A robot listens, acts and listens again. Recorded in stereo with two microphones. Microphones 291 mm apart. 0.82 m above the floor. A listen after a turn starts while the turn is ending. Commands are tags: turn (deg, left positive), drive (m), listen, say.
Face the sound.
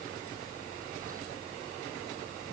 <listen/>
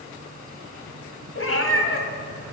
<turn deg="50"/>
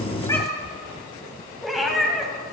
<say>Facing the cat meowing, 1 to 2 m away.</say>